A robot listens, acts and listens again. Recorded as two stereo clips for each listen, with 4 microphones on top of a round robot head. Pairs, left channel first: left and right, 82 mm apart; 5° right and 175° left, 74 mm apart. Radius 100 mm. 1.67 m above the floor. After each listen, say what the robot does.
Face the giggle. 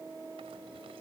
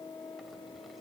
Keep listening.
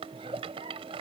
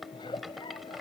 Turn 50° right.
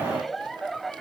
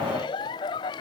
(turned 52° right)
Facing the giggle.